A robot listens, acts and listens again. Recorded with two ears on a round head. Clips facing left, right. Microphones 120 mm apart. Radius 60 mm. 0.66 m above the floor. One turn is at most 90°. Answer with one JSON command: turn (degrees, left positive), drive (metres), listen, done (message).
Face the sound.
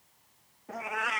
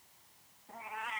{"turn": 90}
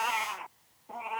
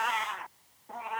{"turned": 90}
{"done": "Facing the cat meowing."}